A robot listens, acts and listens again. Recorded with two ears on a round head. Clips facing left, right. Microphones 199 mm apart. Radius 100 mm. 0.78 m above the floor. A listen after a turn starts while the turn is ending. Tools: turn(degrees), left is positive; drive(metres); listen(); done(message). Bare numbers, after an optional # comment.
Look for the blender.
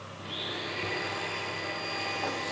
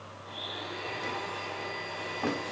turn(90)
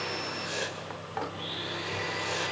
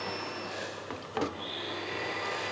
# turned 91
done("Found it: a blender, straight ahead, over 4 m away.")